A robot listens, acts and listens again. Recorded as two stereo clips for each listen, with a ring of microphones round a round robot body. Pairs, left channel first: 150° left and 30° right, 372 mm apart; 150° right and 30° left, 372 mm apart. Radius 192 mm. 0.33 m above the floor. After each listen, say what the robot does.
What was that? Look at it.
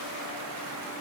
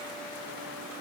Keep listening.
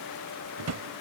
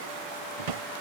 Turn 15° left.
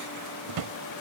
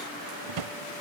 Found it: a drawer, straight ahead.